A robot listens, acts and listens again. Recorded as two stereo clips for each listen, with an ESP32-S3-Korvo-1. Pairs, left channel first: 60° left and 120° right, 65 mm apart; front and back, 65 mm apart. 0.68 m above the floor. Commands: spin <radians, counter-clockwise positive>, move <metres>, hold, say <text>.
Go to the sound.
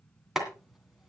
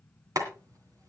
spin 2.71
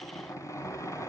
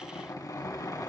spin 0.44
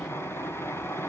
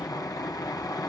spin 0.17
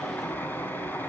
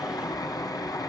move 1.0
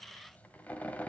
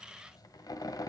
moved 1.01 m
move 1.0
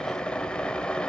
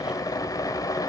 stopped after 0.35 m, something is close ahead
spin -0.26
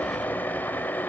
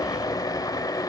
say Arrived at the boiling, straight ahead.